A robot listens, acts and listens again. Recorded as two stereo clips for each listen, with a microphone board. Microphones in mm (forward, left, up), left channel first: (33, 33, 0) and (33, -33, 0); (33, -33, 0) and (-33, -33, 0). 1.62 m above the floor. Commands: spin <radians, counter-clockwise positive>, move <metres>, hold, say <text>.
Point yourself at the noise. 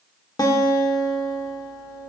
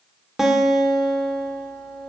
spin 1.66
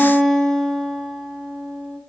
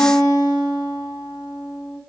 say Facing the guitar, 1 to 2 m away.